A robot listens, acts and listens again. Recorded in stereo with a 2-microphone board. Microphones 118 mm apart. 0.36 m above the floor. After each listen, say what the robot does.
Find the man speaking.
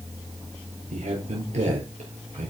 Turn 60° right.
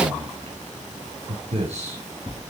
Turn 60° right.
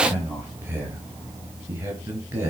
Turn 20° right.
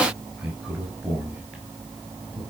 Facing the man speaking, over 4 m away.